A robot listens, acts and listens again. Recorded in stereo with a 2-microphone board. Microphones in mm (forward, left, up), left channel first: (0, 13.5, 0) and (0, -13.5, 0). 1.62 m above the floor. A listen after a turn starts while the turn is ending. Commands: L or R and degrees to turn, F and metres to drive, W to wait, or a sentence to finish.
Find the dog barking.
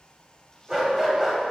R15
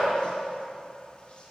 W
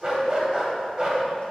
R150
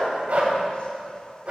R55
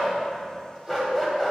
L20
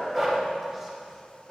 W
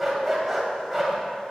Found it: a dog barking, straight ahead, 2 to 4 m away.